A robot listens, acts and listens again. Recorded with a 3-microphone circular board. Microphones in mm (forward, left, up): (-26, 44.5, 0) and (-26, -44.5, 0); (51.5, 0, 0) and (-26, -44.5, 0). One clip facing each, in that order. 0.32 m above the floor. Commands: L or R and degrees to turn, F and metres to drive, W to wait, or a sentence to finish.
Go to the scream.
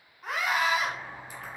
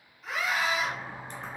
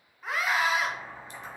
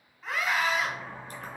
L110
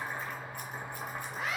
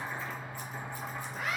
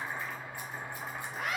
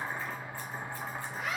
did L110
L35
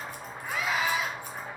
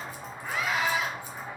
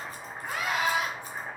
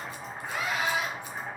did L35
L10
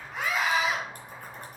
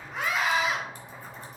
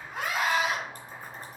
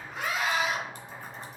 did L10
F1.0
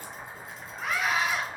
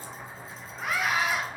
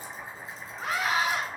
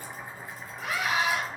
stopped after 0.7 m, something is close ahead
Arrived at the scream, straight ahead.